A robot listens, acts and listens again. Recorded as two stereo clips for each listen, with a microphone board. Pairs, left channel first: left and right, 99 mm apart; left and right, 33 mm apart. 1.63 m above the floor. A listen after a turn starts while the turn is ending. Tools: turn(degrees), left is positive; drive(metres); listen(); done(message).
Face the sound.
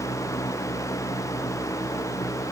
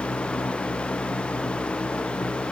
listen()
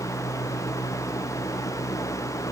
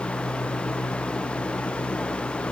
listen()
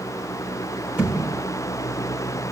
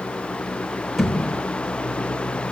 turn(degrees=-30)
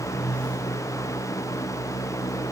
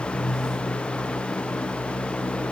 listen()
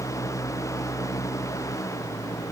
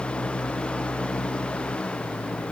done("I heard a thud, but can't make it out now. It was about 15° left or 135° right.")